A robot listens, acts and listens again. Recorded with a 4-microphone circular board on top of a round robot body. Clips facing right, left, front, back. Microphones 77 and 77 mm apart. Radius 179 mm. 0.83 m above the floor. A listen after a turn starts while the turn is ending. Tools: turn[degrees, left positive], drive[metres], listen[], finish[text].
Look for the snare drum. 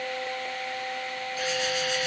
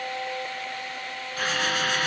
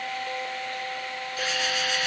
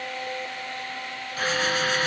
Action: listen[]
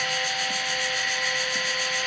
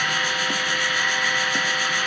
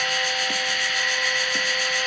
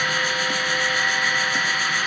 Action: listen[]
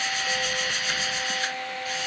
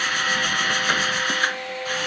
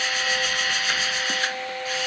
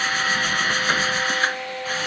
Action: finish[I can't make out a snare drum, only a drill.]